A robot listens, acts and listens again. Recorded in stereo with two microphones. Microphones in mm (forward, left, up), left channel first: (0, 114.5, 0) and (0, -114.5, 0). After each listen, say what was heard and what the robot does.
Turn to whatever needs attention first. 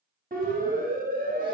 The siren: about 40° right or 140° right. Turn 40° right.
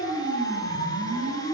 So it is at 100° right. Turn 100° right.
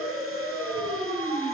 The siren is now 15° right. Turn 15° right.
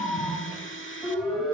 Facing the siren.